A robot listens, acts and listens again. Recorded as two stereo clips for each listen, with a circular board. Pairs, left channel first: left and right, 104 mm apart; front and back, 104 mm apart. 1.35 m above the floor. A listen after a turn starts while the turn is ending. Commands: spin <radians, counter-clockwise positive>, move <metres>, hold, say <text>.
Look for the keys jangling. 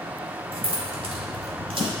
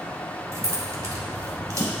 spin -2.09
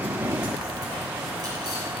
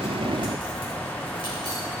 hold
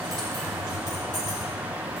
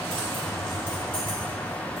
spin -0.70
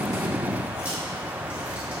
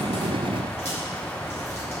spin -0.17
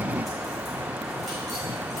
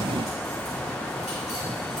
hold
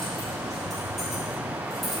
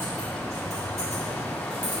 say Facing the keys jangling.